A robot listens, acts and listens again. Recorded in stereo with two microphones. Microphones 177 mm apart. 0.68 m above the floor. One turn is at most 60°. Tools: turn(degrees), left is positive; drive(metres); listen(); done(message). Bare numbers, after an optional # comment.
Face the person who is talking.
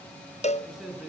turn(-30)
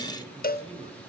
# So it is at 145° right.
turn(-60)
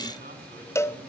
# Nothing new. It was at 85° right.
turn(-60)
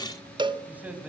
# The man speaking is now 10° right.
turn(-10)
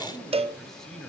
done("Found it: a man speaking, straight ahead, 2 to 4 m away.")